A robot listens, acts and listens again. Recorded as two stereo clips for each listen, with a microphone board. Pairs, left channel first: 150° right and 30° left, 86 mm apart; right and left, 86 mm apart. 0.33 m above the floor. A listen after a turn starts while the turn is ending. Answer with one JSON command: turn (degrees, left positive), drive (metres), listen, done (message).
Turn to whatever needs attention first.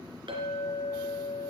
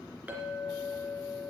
{"listen": true}
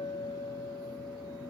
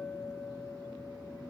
{"listen": true}
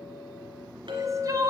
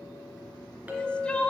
{"turn": -15}
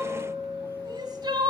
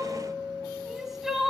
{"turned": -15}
{"done": "Found it: crying, straight ahead."}